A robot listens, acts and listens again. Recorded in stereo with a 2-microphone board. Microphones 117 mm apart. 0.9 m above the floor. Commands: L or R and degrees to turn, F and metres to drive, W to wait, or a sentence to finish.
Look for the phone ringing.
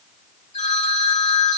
L70
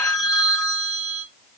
Facing the phone ringing.